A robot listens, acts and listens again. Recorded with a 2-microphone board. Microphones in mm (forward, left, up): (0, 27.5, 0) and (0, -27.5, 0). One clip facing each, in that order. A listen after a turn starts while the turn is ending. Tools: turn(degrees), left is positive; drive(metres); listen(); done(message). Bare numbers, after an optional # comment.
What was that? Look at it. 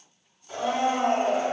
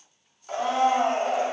turn(-90)
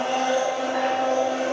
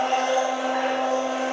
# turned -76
# So it is at 10° right.
turn(-10)
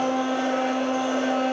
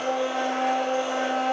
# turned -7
done("Facing the blender.")